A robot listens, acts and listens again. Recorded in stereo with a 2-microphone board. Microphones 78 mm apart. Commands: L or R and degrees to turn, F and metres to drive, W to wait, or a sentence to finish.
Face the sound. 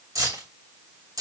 R50
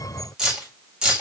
R10
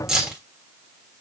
Facing the keys jangling.